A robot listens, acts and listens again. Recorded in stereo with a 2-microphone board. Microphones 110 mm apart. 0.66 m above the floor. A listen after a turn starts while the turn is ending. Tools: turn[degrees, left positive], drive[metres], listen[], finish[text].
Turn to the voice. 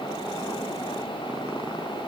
Action: listen[]
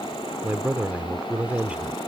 Action: turn[-30]
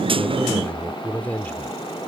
Thought: So it is at 15° left.
Action: turn[15]
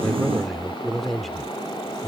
Action: finish[Found it: a man speaking, straight ahead.]